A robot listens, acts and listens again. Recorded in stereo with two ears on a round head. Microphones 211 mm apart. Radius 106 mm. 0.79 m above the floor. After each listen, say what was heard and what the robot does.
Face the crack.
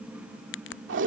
The crack: about 55° left or 125° left. Turn 55° left.
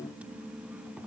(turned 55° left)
Keep listening.
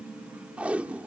I heard a crack, but can't make it out now. It was about straight ahead or 70° left.